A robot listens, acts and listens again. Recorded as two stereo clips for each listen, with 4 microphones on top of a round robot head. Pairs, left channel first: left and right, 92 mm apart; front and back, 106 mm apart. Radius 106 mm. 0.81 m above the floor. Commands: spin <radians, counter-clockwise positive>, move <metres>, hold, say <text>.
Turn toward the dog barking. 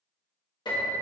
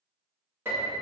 hold
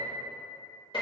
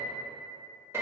hold
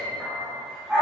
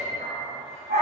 spin -2.97
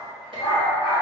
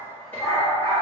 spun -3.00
spin 1.05
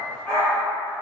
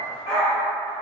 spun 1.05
spin 0.17
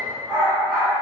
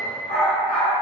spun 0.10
say Facing the dog barking, 1 to 2 m away.